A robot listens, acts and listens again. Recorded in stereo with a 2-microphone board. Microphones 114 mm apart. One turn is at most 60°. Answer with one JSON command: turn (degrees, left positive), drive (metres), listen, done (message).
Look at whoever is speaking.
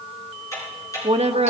{"turn": -60}
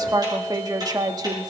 {"turn": -40}
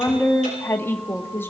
{"turn": 20}
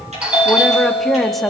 {"done": "Facing the woman speaking."}